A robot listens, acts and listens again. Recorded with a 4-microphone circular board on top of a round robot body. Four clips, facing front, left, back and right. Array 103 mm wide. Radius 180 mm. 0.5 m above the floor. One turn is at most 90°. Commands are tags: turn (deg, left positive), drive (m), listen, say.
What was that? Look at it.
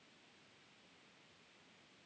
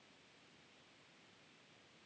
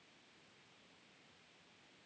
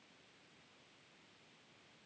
<listen/>
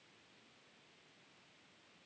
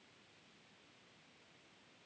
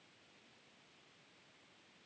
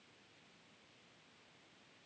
<listen/>
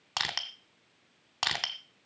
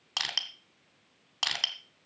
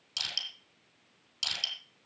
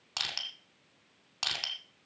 <say>Found it: crushing, straight ahead, under 1 m away.</say>